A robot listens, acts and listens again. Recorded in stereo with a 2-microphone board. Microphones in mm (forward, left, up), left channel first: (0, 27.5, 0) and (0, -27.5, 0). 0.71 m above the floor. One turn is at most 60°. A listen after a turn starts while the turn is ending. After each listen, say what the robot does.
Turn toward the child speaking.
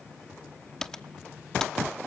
Keep listening.
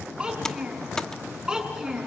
Turn 30° right.
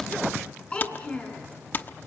Turn 25° left.
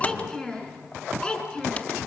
Turn 15° left.
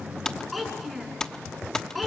Facing the child speaking, over 4 m away.